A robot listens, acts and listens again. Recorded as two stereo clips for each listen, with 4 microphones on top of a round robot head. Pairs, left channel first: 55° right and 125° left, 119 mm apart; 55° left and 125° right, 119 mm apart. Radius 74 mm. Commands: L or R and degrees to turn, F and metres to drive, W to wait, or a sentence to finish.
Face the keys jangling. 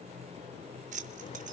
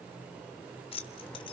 L100
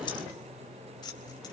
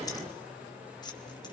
Found it: keys jangling, straight ahead, 2 to 4 m away.